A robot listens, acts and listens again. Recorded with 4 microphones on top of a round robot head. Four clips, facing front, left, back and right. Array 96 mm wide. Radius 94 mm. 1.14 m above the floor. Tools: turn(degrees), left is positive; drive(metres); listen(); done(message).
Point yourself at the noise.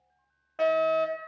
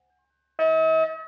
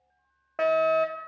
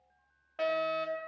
turn(degrees=125)
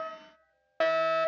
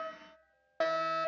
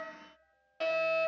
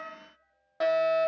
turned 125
turn(degrees=10)
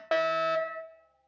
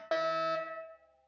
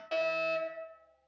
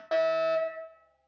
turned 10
done("Found it: a fire alarm, straight ahead.")